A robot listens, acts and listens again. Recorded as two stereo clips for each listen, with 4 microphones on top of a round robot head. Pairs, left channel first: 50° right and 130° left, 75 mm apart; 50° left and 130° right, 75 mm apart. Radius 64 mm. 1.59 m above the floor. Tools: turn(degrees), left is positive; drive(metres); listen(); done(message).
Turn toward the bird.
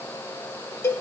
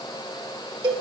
listen()
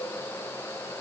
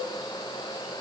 listen()
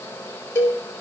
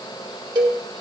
done("I can't make out a bird to turn to.")